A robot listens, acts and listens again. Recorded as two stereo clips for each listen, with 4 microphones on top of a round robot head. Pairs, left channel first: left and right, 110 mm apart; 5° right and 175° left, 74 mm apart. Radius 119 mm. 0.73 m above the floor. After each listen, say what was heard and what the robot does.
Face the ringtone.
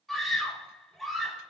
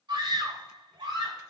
Keep listening.
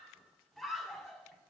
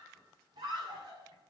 Keep listening.
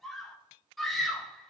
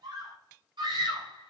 I can't make out a ringtone to turn to.